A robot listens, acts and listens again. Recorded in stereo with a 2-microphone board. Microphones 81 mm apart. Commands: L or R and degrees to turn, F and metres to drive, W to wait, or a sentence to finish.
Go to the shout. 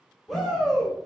L30
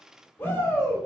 L145
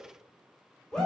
F1.0
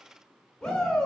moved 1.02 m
L10
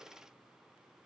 W
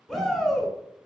F1.0
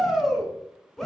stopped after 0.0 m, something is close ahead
I am next to the shout.